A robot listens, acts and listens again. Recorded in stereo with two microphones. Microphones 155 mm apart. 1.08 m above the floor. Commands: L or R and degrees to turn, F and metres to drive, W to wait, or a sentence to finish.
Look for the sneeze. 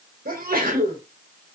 R70
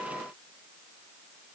W
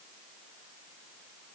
I heard a sneeze, but can't make it out now. It was about straight ahead or 40° right.